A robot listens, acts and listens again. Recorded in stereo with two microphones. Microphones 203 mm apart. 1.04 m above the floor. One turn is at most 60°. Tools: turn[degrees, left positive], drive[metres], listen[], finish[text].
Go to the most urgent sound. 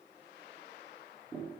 Action: listen[]
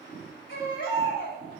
Action: turn[60]
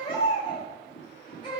Thought: So it is at 25° left.
Action: turn[25]
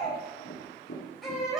Action: drive[1.0]
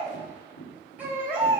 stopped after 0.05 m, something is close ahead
Thought: The baby crying is now 10° right.
Action: turn[-10]
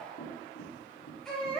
Action: finish[Blocked. The baby crying is further on, straight ahead.]